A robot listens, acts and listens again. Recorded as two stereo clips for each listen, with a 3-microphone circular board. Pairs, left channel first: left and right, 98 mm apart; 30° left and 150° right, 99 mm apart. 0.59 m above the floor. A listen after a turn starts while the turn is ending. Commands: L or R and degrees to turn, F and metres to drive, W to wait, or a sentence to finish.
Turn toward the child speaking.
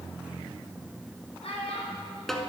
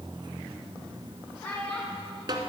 L105
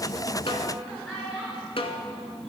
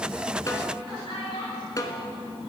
Found it: a child speaking, straight ahead, over 4 m away.